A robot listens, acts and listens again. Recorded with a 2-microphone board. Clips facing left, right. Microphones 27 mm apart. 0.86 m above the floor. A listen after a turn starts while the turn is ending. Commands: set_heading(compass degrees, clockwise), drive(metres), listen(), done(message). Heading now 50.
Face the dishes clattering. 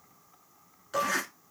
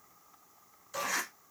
set_heading(350)
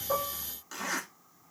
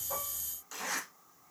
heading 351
listen()
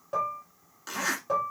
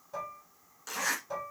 set_heading(286)
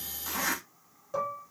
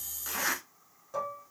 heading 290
done("Facing the dishes clattering, 1 to 2 m away.")